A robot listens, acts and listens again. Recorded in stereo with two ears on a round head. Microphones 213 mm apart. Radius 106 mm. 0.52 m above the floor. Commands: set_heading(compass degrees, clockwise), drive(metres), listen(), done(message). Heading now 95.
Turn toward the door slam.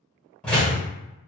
set_heading(65)
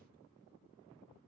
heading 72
listen()
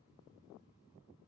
done("I heard a door slam, but can't make it out now. It was about 20° right or 150° left.")